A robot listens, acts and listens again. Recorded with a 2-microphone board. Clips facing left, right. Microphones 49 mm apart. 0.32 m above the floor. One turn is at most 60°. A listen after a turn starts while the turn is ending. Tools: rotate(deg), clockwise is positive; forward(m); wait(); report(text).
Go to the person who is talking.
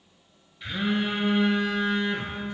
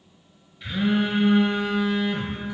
wait()
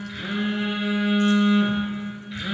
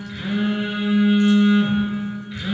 wait()
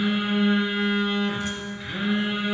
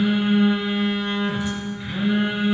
report("I can't make out anyone speaking, only a phone buzzing.")